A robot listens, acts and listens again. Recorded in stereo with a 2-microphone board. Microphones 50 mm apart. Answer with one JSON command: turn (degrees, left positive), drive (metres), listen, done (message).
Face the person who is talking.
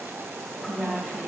{"turn": -30}
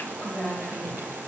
{"turn": 25}
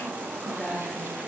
{"done": "Facing the woman speaking."}